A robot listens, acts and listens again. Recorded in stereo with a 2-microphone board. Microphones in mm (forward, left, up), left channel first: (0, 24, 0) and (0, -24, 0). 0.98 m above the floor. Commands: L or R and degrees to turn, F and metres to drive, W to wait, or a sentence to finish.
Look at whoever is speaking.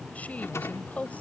L30
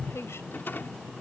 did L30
W
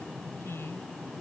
L115
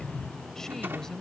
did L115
L10
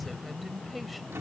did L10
Found it: a woman speaking, straight ahead.